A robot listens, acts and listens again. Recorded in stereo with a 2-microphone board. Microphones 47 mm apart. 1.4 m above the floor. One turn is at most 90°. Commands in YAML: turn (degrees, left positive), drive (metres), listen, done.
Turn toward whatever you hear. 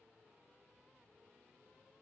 listen: true
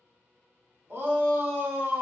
turn: -50
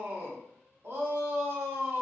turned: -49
turn: -75
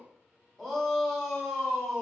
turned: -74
done: "Facing the shout, under 1 m away."